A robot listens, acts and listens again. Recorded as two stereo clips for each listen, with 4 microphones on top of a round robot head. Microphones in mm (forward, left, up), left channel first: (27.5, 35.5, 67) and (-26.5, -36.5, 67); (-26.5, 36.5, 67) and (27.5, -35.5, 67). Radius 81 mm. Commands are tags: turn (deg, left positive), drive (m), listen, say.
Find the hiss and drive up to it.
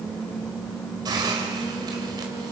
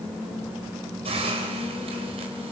<turn deg="-80"/>
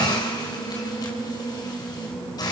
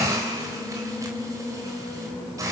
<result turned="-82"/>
<drive m="1.0"/>
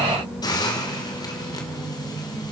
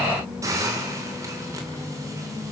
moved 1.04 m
<drive m="1.0"/>
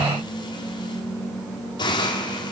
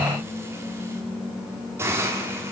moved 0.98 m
<turn deg="10"/>
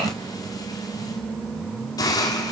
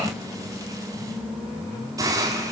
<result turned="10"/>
<drive m="1.0"/>
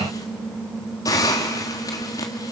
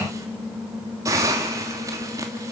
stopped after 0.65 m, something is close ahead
<say>I am next to the hiss.</say>